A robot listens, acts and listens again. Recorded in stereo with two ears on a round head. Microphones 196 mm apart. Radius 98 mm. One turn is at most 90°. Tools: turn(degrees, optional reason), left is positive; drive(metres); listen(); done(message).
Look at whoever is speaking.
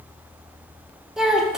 turn(degrees=-30)
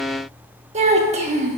turn(degrees=-90, reason="So it is at 150° right.")
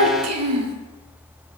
turn(degrees=-90, reason="The child speaking is now 90° right.")
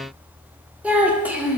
done("Facing the child speaking.")